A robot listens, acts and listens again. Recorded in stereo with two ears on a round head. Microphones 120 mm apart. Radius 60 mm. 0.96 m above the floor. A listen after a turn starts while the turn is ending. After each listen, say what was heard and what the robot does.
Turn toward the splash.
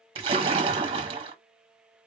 The splash: about 40° right or 140° right. Turn 40° right.
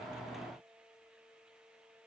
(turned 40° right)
Keep listening.
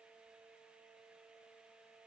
I heard a splash, but can't make it out now. It was about straight ahead or 100° right.